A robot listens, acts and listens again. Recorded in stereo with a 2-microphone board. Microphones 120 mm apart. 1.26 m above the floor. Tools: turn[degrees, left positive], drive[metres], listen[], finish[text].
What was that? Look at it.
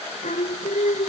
Action: turn[90]
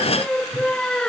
Action: finish[Found it: singing, straight ahead.]